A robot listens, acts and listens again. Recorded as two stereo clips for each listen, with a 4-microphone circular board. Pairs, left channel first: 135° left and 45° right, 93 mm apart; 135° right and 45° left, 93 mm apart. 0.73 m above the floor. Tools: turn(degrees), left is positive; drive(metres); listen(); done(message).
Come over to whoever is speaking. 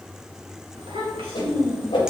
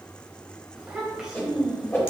turn(degrees=-35)
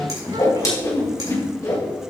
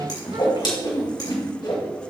listen()
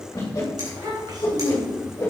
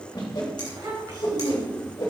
drive(metres=1.0)
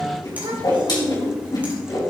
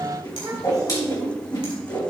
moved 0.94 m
turn(degrees=-10)
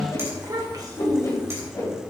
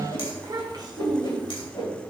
drive(metres=1.0)
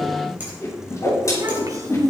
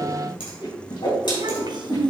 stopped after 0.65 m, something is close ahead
done("I am next to the child speaking.")